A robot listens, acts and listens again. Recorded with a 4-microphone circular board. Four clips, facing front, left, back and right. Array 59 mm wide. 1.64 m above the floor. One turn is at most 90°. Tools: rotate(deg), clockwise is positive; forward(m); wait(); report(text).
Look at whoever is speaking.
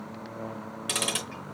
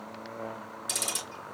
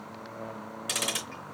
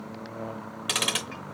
wait()
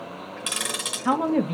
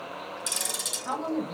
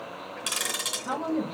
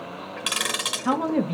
rotate(25)
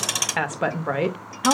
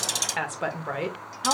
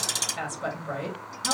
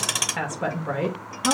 rotate(-10)
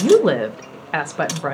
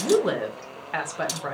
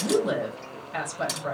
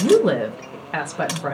report("Found it: a woman speaking, straight ahead, under 1 m away.")